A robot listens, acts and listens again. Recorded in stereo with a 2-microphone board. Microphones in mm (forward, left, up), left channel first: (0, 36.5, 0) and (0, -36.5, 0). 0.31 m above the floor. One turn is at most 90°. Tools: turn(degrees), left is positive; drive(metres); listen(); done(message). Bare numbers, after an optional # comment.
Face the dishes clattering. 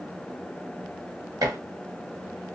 # The dishes clattering: about 55° right or 125° right.
turn(-55)
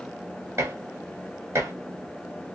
# So it is at 50° right.
turn(-50)
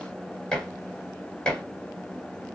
# The dishes clattering is now 10° left.
turn(10)
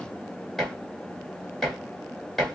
done("Facing the dishes clattering, 1 to 2 m away.")